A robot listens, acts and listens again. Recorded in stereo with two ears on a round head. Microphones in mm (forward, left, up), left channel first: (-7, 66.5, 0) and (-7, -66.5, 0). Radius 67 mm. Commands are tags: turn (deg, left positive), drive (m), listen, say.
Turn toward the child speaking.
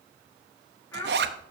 <turn deg="20"/>
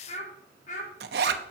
<turn deg="125"/>
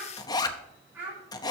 <turn deg="-10"/>
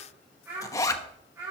<turn deg="-20"/>
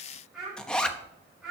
<say>Facing the child speaking, over 4 m away.</say>